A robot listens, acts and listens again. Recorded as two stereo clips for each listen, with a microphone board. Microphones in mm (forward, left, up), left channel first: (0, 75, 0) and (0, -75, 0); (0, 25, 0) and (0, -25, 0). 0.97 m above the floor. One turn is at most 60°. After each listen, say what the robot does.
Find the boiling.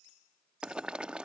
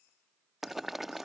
Turn 30° right.
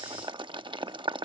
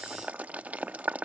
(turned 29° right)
Turn 60° right.
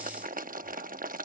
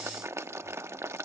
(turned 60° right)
Turn 60° right.
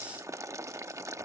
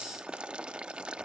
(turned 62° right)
Turn 20° right.
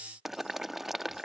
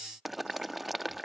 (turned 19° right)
Facing the boiling.